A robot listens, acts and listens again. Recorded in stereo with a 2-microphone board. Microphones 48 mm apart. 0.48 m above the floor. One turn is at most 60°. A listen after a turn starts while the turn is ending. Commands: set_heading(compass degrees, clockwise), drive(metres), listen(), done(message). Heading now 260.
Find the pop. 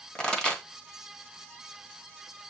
set_heading(245)
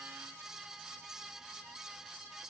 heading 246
listen()
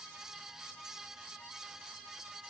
done("I heard a pop, but can't make it out now. It was about 5° left or 150° left.")